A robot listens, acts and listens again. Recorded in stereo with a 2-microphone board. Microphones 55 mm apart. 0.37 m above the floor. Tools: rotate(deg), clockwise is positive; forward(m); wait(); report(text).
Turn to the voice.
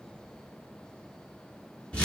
wait()
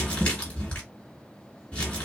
wait()
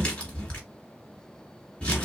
report("I can't make out anyone speaking to turn to.")